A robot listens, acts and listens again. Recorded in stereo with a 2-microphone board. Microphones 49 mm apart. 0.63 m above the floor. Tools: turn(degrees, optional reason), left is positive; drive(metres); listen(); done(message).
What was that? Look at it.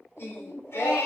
turn(degrees=65, reason="The singing: about 65° left or 115° left.")
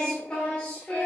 turn(degrees=25, reason="So it is at 25° left.")
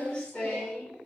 turn(degrees=20, reason="The singing is now 20° left.")
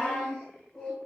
turn(degrees=15, reason="The singing is now 15° left.")
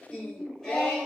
turn(degrees=10, reason="The singing is now 10° left.")
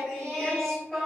done("Facing the singing.")